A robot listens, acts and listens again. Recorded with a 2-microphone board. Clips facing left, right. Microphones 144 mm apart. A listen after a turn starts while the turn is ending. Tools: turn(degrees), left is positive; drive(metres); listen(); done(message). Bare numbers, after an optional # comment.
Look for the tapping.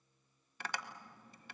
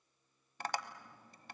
# The tapping: about 40° right or 140° right.
turn(-40)
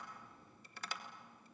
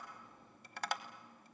# So it is at 95° right.
turn(-95)
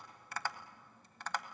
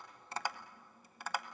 # The tapping is now 10° right.
turn(-10)
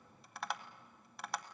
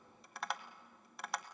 done("Found it: tapping, straight ahead, 1 to 2 m away.")